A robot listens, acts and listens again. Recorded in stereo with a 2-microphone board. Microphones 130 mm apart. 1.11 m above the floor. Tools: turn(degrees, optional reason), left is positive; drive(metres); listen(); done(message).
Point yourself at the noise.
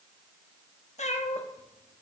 turn(degrees=60, reason="The cat meowing: about 60° left or 120° left.")
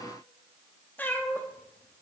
turn(degrees=15, reason="So it is at 15° left.")
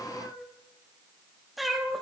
done("Found it: a cat meowing, straight ahead.")